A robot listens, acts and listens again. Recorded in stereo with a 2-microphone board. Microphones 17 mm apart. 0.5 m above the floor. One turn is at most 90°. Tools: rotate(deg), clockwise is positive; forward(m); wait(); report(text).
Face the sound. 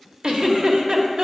rotate(60)
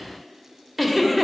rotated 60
rotate(15)
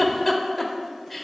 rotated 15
report("Found it: a giggle, straight ahead.")